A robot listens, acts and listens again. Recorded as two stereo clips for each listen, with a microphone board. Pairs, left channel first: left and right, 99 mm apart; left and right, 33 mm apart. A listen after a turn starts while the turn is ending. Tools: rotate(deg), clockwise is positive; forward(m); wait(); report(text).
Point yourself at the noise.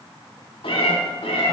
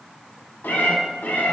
rotate(-90)
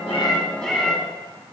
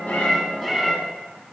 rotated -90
rotate(-10)
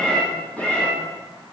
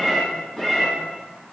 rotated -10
rotate(-20)
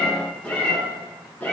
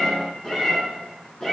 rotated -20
rotate(-20)
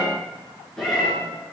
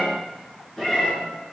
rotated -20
report("Facing the cat meowing.")